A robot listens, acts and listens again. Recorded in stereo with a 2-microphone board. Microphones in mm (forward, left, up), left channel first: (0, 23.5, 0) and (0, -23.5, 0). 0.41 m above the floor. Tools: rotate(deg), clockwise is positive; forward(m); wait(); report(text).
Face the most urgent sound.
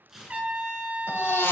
rotate(-60)
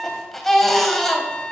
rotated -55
report("Facing the baby crying.")